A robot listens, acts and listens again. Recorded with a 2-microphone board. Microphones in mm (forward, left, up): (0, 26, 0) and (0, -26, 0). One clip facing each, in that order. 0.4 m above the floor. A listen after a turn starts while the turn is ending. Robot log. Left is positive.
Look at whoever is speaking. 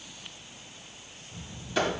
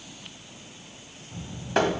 note: The child speaking: about 45° right or 135° right.
cmd yaw -45
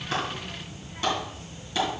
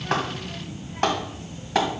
end: Facing the child speaking, 1 to 2 m away.